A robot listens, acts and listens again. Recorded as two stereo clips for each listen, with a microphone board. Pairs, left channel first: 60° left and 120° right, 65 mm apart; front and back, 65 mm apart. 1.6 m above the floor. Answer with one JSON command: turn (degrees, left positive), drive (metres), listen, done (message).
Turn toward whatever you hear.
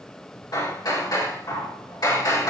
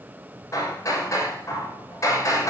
{"turn": 40}
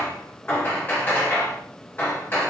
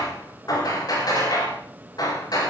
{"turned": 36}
{"done": "Found it: hammering, straight ahead."}